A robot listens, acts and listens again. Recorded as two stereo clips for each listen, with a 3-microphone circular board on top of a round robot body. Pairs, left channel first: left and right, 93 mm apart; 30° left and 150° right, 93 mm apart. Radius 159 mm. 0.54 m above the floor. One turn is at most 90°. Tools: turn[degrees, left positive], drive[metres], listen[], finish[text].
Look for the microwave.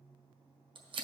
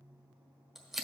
Action: listen[]
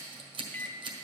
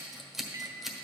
Thought: The microwave: 160° left.
Action: turn[90]
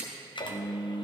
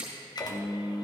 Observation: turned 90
Thought: The microwave is now 65° left.
Action: turn[65]
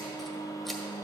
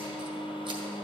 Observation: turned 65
Thought: The microwave is now 40° left.
Action: turn[40]
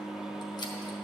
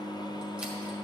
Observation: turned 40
Thought: The microwave is now 10° right.
Action: turn[-10]
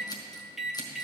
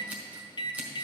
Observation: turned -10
Action: finish[Facing the microwave, under 1 m away.]